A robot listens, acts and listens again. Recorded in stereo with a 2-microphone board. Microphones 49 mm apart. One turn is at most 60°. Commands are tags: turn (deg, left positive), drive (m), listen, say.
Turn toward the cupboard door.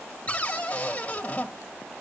<turn deg="30"/>
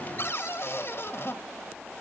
<turn deg="60"/>
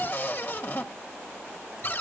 <turn deg="55"/>
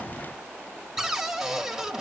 <say>Found it: a cupboard door, straight ahead, 1 to 2 m away.</say>